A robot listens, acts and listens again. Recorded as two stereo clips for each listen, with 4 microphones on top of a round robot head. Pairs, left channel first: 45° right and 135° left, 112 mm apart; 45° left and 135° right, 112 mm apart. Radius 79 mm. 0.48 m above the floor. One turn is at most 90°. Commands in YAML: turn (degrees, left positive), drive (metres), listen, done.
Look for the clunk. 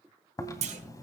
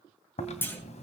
turn: 90
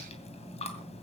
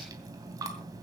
turn: 25
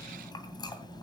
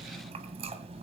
done: "Facing where the clunk came from. I can't hear it now."